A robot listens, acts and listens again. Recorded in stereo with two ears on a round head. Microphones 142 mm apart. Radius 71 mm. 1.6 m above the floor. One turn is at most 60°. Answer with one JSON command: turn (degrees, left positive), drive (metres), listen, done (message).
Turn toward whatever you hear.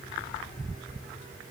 {"listen": true}
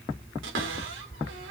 {"turn": -60}
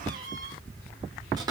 {"turn": -25}
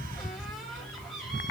{"done": "Facing the cupboard door."}